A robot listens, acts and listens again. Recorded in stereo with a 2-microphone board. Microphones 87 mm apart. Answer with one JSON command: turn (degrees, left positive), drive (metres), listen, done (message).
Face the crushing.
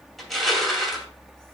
{"turn": 30}
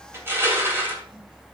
{"turn": -30}
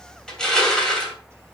{"turn": 10}
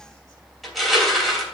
{"done": "Facing the crushing, 2 to 4 m away."}